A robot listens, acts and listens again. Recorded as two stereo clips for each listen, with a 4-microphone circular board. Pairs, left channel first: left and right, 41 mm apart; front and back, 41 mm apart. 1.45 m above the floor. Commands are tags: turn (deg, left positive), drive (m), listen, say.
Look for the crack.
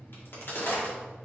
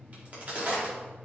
<turn deg="125"/>
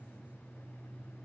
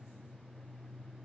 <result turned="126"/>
<say>Facing where the crack came from. I can't hear it now.</say>